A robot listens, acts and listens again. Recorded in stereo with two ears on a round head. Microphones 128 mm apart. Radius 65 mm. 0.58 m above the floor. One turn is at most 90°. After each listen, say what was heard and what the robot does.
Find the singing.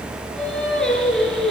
Turn 30° left.
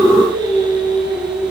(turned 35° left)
So it is at 35° right. Turn 35° right.
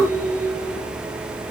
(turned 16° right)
Nothing new. It was at 20° right. Turn 20° right.
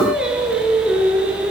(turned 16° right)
The singing is now 10° right. Turn 10° right.
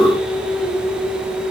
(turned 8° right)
Facing the singing, over 4 m away.